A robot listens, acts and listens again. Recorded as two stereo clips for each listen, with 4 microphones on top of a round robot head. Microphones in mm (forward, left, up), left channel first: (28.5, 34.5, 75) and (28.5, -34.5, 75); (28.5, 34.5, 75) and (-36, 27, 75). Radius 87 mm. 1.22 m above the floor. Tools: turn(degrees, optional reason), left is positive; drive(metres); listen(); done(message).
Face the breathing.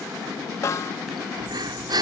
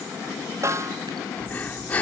turn(degrees=-65, reason="The breathing: 65° right.")
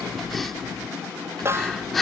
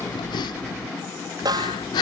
done("Found it: breathing, straight ahead.")